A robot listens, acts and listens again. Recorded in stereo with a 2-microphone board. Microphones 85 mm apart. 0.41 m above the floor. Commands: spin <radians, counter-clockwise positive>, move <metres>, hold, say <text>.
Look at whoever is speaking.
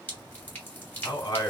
spin 1.05
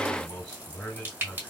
spin 0.17
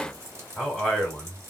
say Found it: a man speaking, straight ahead, 1 to 2 m away.